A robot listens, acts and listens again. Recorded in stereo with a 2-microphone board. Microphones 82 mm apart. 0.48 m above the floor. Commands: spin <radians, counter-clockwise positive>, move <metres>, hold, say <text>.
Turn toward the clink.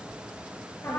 hold
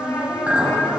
spin -0.35
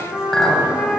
say Facing the clink.